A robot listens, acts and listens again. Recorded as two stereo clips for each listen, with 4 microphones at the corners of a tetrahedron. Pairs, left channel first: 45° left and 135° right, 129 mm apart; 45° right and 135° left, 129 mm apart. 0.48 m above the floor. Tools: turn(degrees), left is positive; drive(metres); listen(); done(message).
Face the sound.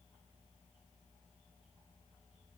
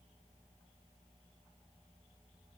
listen()
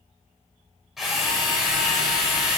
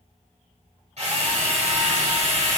turn(degrees=135)
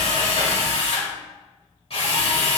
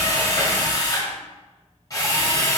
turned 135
turn(degrees=15)
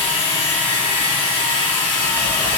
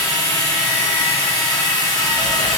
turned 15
done("Found it: a drill, straight ahead, 2 to 4 m away.")